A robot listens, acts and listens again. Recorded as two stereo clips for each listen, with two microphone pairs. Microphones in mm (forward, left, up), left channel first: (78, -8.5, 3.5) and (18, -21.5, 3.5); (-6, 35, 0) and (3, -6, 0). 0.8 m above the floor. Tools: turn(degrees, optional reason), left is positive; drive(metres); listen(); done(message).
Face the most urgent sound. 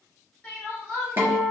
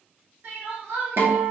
turn(degrees=-60, reason="The crying: 60° right.")
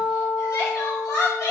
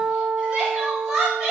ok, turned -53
done("Facing the crying.")